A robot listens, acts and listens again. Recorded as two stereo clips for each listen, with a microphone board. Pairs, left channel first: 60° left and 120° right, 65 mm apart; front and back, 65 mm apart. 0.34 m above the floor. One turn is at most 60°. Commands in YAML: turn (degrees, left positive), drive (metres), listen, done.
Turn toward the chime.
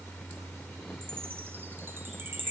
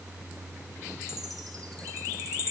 turn: -60
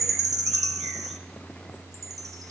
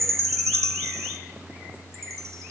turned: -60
turn: -60
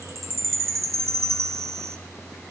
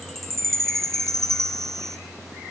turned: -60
turn: -60
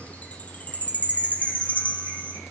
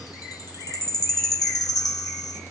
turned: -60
done: "Found it: a chime, straight ahead."